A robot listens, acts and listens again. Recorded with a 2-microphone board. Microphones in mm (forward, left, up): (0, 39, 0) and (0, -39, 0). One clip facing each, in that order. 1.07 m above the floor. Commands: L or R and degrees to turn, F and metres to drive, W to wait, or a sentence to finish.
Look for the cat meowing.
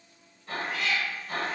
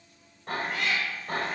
R60
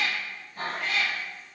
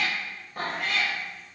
R70
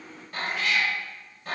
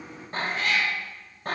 R55
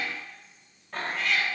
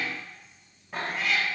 Found it: a cat meowing, straight ahead, 1 to 2 m away.